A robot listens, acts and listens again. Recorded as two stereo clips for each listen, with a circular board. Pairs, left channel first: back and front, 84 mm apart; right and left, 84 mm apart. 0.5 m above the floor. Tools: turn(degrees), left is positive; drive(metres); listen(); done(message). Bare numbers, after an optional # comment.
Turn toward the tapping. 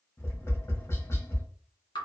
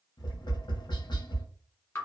# The tapping: 120° right.
turn(-120)
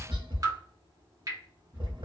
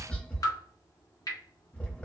# The tapping is now 15° right.
turn(-15)
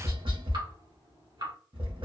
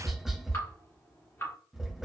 done("Found it: tapping, straight ahead, 1 to 2 m away.")